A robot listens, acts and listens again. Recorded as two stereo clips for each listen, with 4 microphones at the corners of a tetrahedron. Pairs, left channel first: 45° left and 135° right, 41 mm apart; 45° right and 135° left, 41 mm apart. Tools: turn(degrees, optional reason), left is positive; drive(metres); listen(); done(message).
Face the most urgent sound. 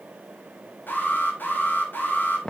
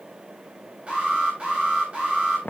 turn(degrees=70, reason="The alarm: 70° left.")
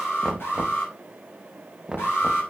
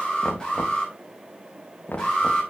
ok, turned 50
turn(degrees=20, reason="The alarm is now 20° left.")
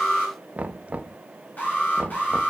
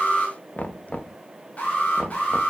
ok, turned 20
done("Found it: an alarm, straight ahead, over 4 m away.")